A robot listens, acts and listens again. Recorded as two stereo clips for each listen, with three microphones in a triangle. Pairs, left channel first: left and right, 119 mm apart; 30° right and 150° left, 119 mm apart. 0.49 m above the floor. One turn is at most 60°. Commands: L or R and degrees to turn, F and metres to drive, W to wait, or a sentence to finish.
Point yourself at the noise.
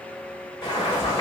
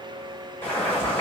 L40
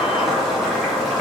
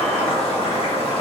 Facing the boiling.